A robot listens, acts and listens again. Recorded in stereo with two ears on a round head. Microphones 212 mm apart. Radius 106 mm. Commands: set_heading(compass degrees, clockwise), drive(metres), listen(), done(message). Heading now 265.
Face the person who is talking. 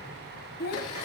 set_heading(225)
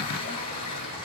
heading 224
listen()
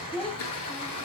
done("Found it: a child speaking, straight ahead, 1 to 2 m away.")